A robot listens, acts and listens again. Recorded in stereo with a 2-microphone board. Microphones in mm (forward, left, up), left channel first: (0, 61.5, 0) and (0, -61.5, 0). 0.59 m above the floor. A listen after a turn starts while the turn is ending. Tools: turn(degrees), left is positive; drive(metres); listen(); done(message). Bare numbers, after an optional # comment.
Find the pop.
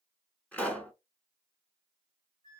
turn(30)
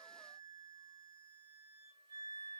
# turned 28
listen()
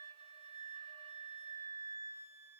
done("I heard a pop, but can't make it out now. It was about 15° right or 140° left.")